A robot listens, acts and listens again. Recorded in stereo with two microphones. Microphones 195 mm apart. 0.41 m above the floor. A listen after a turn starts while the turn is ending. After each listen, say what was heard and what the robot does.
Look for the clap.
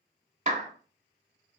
The clap: about 35° right or 145° right. Turn 35° right.
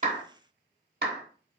So it is at 100° right. Turn 100° right.
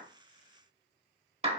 The clap is now 40° right. Turn 40° right.
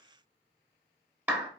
The clap is now 10° right. Turn 10° right.
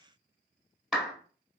Facing the clap, 1 to 2 m away.